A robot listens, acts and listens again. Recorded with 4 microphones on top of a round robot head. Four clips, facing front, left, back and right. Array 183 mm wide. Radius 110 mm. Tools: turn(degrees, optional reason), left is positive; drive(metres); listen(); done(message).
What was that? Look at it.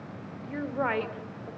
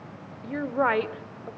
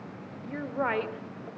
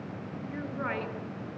turn(degrees=85, reason="The woman speaking: 85° left.")
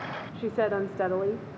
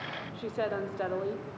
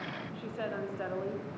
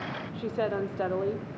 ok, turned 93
turn(degrees=-20, reason="The woman speaking is now 20° right.")
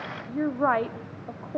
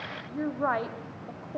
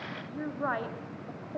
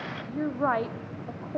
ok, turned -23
turn(degrees=-30, reason="The woman speaking is now 30° right.")
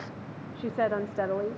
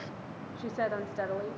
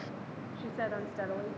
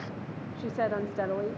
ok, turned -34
turn(degrees=-30, reason="The woman speaking is now 30° right.")
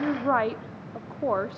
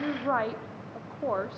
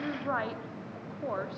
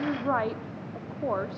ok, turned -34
done("Facing the woman speaking, 1 to 2 m away.")